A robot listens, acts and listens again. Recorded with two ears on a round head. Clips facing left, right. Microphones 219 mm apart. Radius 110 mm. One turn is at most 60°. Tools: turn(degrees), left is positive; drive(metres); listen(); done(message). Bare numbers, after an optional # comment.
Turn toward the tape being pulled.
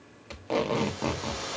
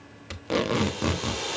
# The tape being pulled: about 25° right or 155° right.
turn(-25)
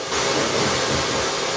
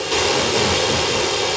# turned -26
listen()
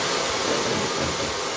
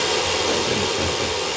listen()
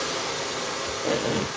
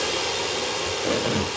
done("Facing the tape being pulled.")